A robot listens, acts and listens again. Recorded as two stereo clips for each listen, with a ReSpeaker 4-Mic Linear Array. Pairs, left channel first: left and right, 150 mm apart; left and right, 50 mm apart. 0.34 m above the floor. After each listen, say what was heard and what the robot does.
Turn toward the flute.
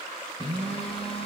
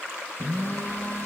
Keep listening.
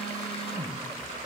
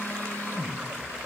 Keep listening.
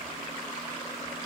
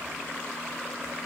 I can't make out a flute to turn to.